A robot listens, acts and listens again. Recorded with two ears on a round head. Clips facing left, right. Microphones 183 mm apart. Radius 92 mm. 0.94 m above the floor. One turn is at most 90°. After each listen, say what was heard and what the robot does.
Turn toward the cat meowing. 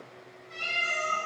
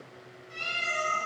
The cat meowing: about 30° right or 150° right. Turn 30° right.
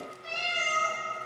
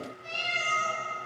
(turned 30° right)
So it is at 10° right. Turn 10° right.
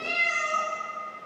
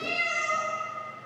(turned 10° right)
The cat meowing is now 10° right. Turn 10° right.
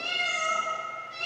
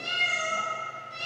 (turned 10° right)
The cat meowing is now 15° right. Turn 15° right.
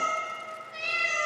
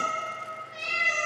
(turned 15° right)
Found it: a cat meowing, straight ahead.